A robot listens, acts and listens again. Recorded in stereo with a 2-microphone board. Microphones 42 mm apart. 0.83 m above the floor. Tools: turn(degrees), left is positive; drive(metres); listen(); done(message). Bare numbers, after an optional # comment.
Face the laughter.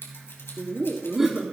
turn(-30)
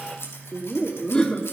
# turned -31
# So it is at 20° left.
turn(20)
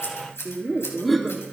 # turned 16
done("Found it: laughter, straight ahead.")